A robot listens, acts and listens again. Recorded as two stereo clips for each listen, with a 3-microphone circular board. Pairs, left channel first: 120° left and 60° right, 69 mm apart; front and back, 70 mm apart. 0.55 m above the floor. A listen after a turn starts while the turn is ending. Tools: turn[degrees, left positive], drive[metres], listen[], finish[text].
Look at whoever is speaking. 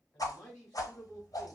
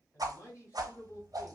Thought: The man speaking: 50° left.
Action: turn[50]
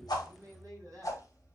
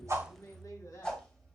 Thought: The man speaking is now 25° right.
Action: turn[-25]
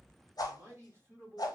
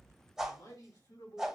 Action: finish[Facing the man speaking, 2 to 4 m away.]